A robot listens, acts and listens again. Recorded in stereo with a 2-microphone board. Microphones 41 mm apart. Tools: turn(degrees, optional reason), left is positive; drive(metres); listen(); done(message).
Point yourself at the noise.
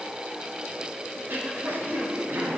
turn(degrees=-90)
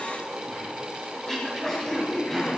turn(degrees=10, reason="So it is at 10° left.")
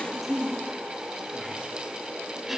done("Facing the throat clearing.")